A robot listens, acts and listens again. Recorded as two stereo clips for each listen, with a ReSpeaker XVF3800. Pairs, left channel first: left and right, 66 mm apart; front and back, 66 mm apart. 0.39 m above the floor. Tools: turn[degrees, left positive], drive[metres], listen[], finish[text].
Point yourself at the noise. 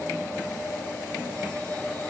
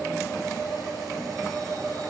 Action: listen[]
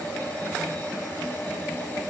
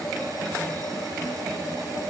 Action: listen[]
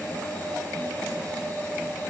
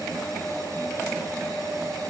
Action: finish[I can't make out anything.]